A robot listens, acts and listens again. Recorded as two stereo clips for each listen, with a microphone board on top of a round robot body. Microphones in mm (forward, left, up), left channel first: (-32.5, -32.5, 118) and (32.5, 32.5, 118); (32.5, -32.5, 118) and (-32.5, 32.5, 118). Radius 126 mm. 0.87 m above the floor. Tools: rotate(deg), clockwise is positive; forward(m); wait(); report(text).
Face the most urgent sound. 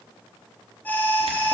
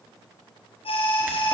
rotate(65)
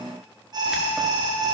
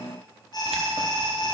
report("Found it: an alarm, straight ahead.")